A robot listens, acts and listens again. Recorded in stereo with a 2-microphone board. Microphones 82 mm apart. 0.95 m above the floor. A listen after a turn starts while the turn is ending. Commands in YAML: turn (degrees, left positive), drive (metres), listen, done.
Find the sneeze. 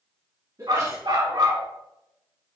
turn: -45
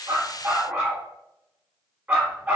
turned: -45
listen: true
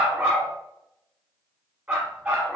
done: "I heard a sneeze, but can't make it out now. It was about straight ahead or 90° right."